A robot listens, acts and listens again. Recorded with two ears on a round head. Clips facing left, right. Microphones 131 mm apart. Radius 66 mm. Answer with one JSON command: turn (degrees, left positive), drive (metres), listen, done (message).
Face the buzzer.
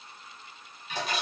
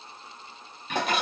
{"listen": true}
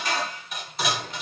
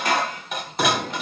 {"listen": true}
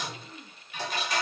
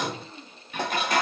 {"done": "I can't make out a buzzer to turn to."}